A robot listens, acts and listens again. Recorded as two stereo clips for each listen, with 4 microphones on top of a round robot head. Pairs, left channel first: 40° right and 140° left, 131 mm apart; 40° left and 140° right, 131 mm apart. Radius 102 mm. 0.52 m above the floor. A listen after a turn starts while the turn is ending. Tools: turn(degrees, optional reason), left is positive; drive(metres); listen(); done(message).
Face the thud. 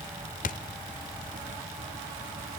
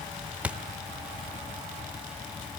turn(degrees=-60, reason="The thud: 60° right.")
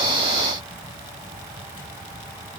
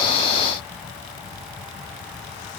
done("I heard a thud from this way, but can't make it out now.")